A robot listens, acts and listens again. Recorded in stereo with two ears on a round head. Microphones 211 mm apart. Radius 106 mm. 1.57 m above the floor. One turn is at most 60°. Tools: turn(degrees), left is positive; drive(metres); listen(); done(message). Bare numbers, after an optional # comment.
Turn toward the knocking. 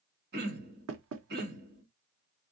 # The knocking: about 65° right or 115° right.
turn(-60)
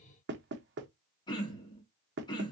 # So it is at 50° right.
turn(-50)
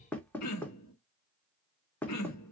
done("Facing the knocking.")